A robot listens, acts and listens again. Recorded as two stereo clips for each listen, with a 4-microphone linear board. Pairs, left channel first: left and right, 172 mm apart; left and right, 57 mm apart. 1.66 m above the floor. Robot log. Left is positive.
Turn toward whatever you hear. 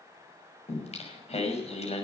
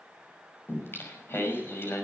note: The singing: about 40° left or 140° left.
cmd yaw +40
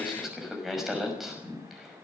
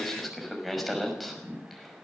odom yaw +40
end: Facing the singing.